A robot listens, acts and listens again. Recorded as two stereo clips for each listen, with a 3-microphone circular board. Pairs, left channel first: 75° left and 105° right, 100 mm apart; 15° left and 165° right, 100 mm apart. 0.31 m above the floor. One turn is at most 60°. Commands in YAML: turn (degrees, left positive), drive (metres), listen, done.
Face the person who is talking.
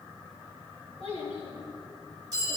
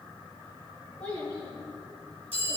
turn: 60
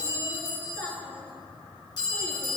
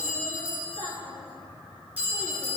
turn: 10
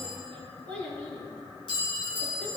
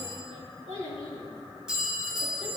done: "Facing the child speaking."